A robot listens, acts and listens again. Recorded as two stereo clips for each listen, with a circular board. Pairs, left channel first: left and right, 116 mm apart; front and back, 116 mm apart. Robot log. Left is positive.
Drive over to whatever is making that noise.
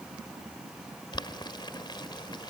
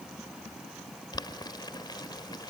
note: The boiling: 45° left.
cmd yaw +45
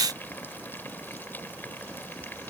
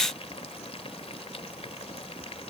note: The boiling is now 20° left.
cmd yaw +20
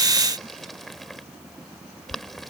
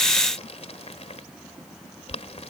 cmd fwd 1.0
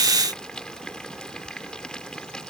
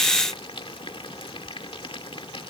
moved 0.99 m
note: The boiling is now 10° left.
cmd yaw +10
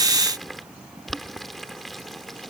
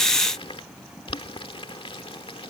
cmd fwd 1.0
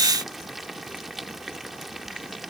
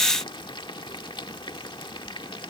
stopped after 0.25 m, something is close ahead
end: I am next to the boiling.